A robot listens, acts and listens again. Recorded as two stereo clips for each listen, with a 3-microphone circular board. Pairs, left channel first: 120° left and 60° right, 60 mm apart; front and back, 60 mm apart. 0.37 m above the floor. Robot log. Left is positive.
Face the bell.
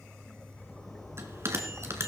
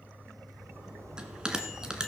note: The bell: 105° right.
cmd yaw -105
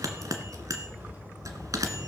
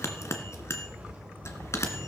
note: The bell is now 40° right.
cmd yaw -40
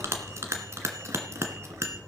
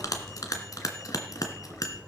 note: The bell is now 20° right.
cmd yaw -20
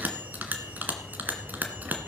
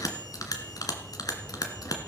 end: Found it: a bell, straight ahead.